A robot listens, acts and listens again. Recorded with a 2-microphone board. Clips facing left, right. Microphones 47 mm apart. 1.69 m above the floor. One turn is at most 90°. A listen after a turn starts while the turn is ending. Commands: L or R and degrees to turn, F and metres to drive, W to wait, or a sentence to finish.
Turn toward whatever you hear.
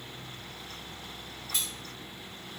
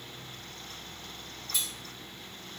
L65
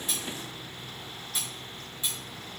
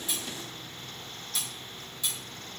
L25
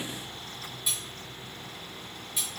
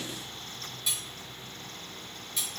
L10
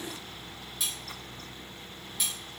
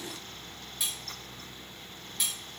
Found it: cutlery clinking, straight ahead, 1 to 2 m away.